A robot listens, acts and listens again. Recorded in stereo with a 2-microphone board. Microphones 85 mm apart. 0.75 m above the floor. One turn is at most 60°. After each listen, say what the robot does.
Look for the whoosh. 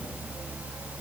Keep listening.
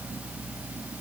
Keep listening.
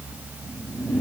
Turn 20° left.
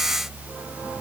Keep listening.
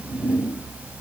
Found it: a whoosh, straight ahead, over 4 m away.